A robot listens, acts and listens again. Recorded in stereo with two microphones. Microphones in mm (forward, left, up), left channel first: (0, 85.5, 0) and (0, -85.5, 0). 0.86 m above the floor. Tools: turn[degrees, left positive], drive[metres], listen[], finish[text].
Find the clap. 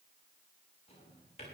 Action: listen[]
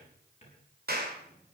Thought: The clap: about 65° right or 115° right.
Action: turn[-65]
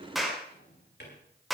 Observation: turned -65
Action: finish[Found it: a clap, straight ahead.]